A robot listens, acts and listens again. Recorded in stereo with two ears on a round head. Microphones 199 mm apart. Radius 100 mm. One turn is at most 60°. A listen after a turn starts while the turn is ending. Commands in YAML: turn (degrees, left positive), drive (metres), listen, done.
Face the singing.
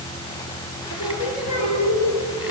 turn: 35
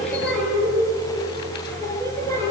turn: 15
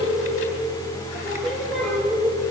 done: "Found it: singing, straight ahead, over 4 m away."